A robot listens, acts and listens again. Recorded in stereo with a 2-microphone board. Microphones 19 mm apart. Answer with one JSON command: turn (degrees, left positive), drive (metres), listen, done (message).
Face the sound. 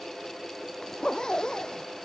{"turn": 40}
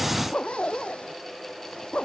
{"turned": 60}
{"turn": 80}
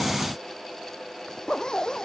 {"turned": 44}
{"turn": 40}
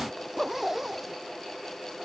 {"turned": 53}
{"turn": -15}
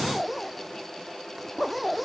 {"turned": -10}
{"done": "Found it: a zipper, straight ahead."}